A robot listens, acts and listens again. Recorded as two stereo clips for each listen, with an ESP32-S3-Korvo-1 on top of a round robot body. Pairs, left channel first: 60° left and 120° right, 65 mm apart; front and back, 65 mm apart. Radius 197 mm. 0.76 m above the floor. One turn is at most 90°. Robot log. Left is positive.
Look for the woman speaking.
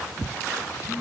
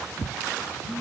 cmd idle
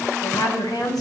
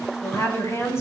note: The woman speaking: 45° left.
cmd yaw +45
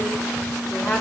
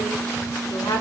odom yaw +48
note: The woman speaking is now 10° right.
cmd yaw -10
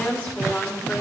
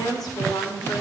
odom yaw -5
note: The woman speaking is now 10° right.
cmd yaw -10
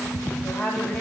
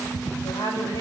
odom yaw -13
end: Found it: a woman speaking, straight ahead, over 4 m away.